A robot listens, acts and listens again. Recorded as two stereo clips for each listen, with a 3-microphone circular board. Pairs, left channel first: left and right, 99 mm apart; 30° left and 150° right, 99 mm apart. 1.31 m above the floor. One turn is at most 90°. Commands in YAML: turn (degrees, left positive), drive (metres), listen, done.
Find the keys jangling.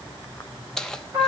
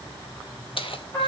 done: "Found it: keys jangling, straight ahead, under 1 m away."